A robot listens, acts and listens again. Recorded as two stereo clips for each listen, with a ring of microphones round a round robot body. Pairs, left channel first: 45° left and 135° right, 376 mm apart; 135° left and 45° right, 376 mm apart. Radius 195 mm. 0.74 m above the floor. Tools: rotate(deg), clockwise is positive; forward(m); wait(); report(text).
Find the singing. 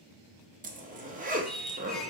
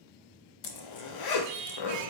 rotate(45)
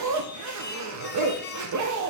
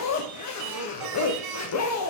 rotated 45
rotate(20)
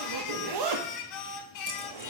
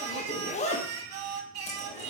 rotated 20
report("Found it: singing, straight ahead.")